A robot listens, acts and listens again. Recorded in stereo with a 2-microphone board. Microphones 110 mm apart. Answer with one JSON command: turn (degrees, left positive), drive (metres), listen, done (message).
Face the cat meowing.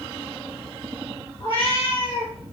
{"turn": 55}
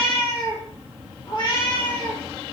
{"turn": 55}
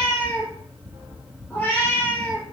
{"turn": 15}
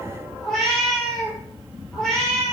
{"done": "Found it: a cat meowing, straight ahead, 1 to 2 m away."}